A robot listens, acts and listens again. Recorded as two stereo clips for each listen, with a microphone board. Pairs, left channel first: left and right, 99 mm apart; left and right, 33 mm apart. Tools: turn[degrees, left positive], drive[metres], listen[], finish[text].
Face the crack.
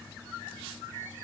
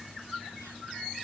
Action: listen[]
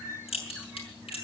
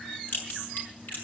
Action: turn[90]
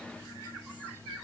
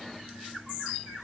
Action: finish[Facing where the crack came from. I can't hear it now.]